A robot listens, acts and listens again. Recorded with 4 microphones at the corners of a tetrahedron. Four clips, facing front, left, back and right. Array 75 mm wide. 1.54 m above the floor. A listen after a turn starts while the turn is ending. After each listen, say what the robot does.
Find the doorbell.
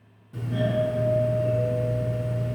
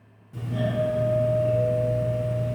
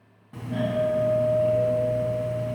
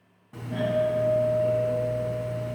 Turn 145° right.
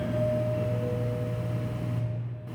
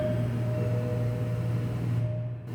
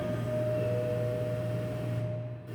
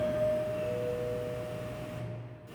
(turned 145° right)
Turn 25° left.
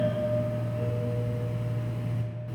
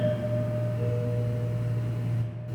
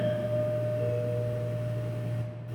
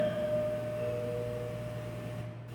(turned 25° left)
Turn 15° left.
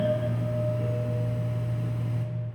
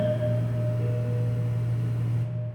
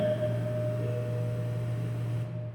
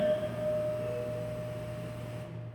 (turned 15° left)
Found it: a doorbell, straight ahead.